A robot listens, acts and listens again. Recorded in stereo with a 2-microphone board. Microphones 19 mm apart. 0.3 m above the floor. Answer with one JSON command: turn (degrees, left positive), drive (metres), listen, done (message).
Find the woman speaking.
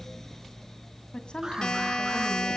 {"turn": 60}
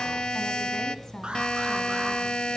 {"turn": 40}
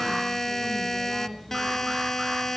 {"turn": 15}
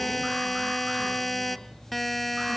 {"listen": true}
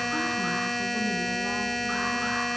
{"listen": true}
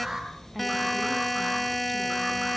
{"done": "Facing where the woman speaking came from. I can't hear it now."}